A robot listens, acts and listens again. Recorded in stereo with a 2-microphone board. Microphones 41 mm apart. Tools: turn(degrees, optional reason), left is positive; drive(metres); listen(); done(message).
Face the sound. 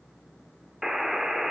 turn(degrees=-30)
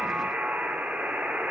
turn(degrees=-135, reason="So it is at 135° right.")
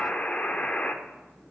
turn(degrees=40, reason="The buzzer is now 40° left.")
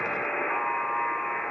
turn(degrees=15, reason="The buzzer is now 15° left.")
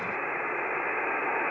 done("Found it: a buzzer, straight ahead.")